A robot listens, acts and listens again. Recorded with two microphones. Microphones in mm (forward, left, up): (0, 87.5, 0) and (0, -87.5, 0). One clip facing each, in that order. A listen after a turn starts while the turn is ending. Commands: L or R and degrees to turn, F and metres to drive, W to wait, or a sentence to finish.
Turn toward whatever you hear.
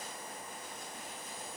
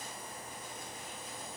W
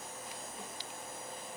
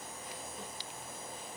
W
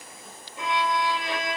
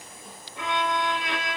R70
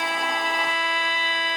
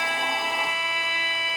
R10
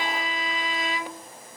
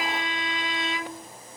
Facing the violin, 1 to 2 m away.